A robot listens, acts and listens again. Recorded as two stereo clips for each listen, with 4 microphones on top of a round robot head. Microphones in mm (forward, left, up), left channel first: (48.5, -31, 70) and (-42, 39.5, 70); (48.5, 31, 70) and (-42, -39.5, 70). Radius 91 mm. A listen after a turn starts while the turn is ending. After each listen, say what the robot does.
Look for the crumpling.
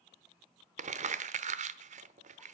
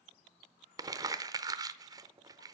Turn 160° left.
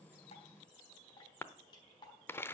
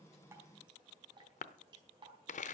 Turn 35° left.
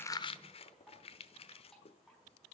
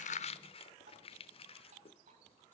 Found it: crumpling, straight ahead.